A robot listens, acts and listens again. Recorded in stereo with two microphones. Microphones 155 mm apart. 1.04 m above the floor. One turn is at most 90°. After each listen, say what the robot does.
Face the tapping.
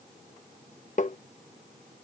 Turn 55° left.
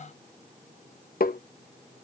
Turn 70° left.
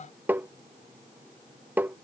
Turn 10° right.
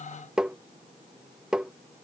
Found it: tapping, straight ahead.